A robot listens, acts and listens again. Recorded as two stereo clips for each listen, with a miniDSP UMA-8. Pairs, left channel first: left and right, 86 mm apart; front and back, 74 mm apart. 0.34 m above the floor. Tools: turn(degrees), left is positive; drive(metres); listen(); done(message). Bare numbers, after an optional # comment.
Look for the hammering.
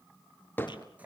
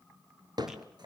# The hammering: 160° left.
turn(160)
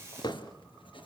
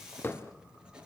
# The hammering is now 60° left.
turn(60)
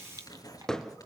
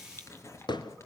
# The hammering is now 10° left.
turn(10)
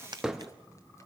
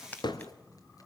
done("Found it: hammering, straight ahead.")